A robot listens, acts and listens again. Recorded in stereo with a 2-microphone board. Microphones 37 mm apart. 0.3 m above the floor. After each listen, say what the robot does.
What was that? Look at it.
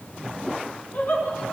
Turn 60° left.
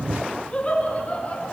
Turn 40° left.
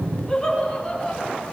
Turn 15° left.
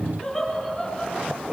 Facing the laughter, over 4 m away.